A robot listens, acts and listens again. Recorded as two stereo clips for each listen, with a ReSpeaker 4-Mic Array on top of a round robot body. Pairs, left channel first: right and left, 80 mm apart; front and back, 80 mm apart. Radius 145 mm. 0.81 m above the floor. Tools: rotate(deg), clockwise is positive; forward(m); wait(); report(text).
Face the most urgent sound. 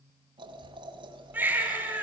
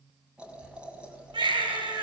rotate(-160)
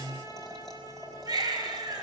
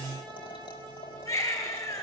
rotate(-50)
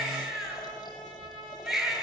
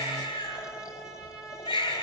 report("Facing the baby crying.")